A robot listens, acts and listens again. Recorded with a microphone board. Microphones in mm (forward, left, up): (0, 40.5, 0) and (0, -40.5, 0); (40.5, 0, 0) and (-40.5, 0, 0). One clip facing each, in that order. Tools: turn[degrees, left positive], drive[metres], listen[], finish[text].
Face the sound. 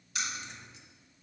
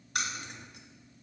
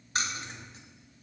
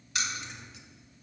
Thought: The keys jangling: 55° right.
Action: turn[-55]
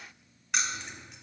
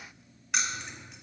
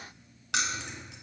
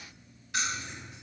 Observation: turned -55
Action: finish[Found it: keys jangling, straight ahead, under 1 m away.]